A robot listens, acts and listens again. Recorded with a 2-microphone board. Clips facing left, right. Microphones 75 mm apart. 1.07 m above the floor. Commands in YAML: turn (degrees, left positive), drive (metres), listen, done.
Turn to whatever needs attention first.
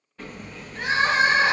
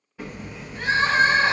turn: 70
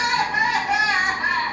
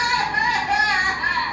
turn: 25
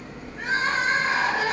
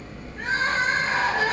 done: "Facing the crying, 1 to 2 m away."